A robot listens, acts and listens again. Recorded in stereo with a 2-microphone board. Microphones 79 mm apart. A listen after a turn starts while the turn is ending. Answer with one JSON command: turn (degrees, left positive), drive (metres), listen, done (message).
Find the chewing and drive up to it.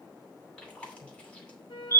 {"turn": 15}
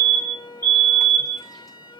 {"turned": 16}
{"listen": true}
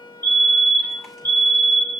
{"listen": true}
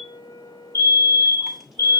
{"done": "I heard chewing, but can't make it out now. It was about straight ahead or 150° left. I did not reach it."}